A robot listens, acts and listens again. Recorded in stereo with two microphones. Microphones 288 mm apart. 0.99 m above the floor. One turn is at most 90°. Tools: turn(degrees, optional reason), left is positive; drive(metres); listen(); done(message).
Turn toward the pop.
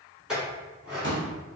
turn(degrees=-40, reason="The pop: about 40° right or 140° right.")
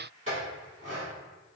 listen()
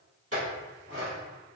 done("I heard a pop, but can't make it out now. It was about straight ahead or 100° right.")